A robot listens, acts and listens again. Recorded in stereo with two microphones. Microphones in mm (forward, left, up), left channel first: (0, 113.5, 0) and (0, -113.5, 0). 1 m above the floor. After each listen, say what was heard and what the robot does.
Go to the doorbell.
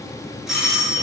Turn 30° left.
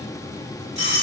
So it is at 30° right. Turn 30° right.
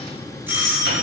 The doorbell is now 10° right. Turn 10° right.
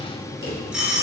Drive 1.0 m forward.
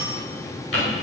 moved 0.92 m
Keep listening.
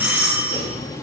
The doorbell is now 10° right. Turn 10° right.
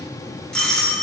Drive 1.0 m forward.
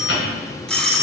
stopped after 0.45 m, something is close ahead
I am next to the doorbell.